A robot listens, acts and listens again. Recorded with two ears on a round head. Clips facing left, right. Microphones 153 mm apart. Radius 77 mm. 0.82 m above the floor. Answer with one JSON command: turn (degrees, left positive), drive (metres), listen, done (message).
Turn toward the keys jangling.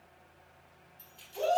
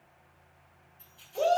{"turn": 20}
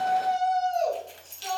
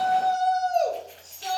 {"turn": 140}
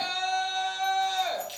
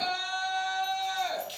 {"turn": 10}
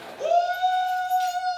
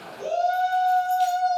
{"listen": true}
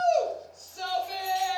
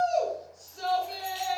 {"listen": true}
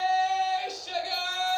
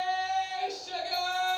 {"done": "I heard keys jangling from this way, but can't make it out now."}